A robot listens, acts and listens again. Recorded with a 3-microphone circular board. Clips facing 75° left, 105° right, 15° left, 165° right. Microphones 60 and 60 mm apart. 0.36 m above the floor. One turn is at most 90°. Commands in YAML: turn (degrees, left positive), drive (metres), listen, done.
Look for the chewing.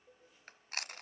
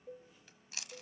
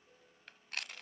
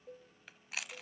turn: 90
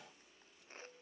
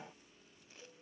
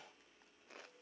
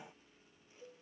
turn: 20
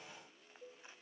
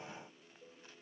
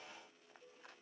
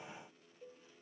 listen: true
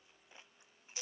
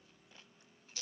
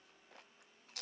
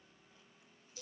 done: "Facing the chewing, under 1 m away."